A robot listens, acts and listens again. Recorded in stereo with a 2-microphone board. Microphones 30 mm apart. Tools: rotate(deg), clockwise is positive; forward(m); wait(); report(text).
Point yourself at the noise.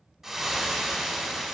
rotate(20)
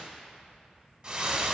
rotate(140)
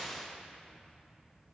rotate(-15)
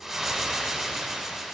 report("Found it: frying, straight ahead, 1 to 2 m away.")